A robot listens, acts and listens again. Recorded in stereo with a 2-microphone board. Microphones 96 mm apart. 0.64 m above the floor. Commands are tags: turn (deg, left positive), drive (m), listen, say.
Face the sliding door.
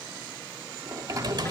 <turn deg="-40"/>
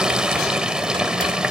<listen/>
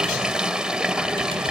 <listen/>
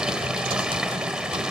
<say>I heard a sliding door, but can't make it out now. It was about straight ahead or 100° right.</say>